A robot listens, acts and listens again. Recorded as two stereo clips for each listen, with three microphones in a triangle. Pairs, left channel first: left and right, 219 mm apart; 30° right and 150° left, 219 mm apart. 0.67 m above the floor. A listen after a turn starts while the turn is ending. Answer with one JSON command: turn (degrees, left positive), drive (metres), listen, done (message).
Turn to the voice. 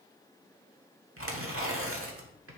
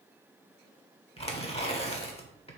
{"listen": true}
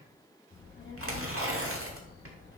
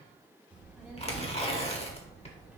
{"turn": 65}
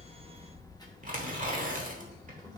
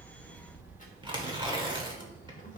{"turn": 20}
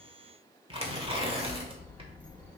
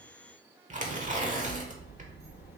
{"done": "Found it: a child speaking, straight ahead."}